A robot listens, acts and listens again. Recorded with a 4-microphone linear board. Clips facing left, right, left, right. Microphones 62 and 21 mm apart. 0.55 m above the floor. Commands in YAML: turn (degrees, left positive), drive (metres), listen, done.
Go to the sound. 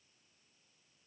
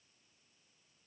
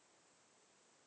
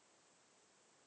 listen: true
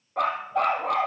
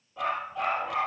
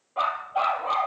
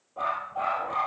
turn: 60
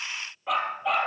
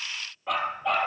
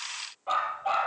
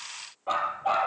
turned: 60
drive: 1.0
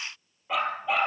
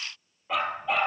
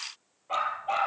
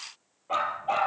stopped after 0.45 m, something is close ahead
done: "Something is in my way. I am facing the dog barking but have not reached it."